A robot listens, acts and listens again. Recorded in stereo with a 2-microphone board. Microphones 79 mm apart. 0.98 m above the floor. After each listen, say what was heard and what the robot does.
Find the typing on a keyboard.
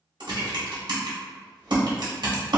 Turn 90° right.
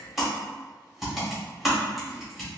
Found it: typing on a keyboard, straight ahead.